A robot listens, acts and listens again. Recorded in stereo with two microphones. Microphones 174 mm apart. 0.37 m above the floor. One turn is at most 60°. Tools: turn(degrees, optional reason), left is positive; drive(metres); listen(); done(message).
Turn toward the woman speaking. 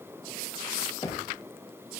listen()
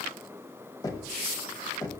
listen()
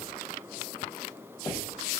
done("I can't make out a woman speaking to turn to.")